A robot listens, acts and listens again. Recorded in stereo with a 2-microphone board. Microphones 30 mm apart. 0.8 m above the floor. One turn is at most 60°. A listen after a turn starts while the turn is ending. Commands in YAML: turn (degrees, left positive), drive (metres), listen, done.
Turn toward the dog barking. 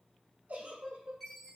listen: true
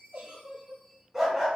turn: -30
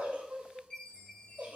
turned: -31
listen: true
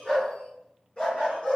turn: 35
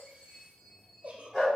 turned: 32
done: "Facing the dog barking, 2 to 4 m away."